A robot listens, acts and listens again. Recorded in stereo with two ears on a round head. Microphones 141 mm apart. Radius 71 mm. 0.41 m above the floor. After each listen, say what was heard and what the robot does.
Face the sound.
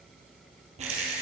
The rattle: about 50° right or 130° right. Turn 50° right.
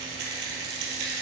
So it is at 75° right. Turn 75° right.
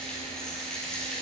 Found it: a rattle, straight ahead.